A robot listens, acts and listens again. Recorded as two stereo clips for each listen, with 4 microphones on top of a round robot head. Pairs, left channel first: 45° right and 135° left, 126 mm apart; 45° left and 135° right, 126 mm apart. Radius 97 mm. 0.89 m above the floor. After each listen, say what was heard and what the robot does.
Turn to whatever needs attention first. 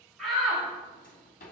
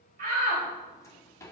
The shout: 130° right. Turn 130° right.
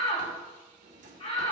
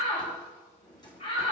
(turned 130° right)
Found it: a shout, straight ahead, over 4 m away.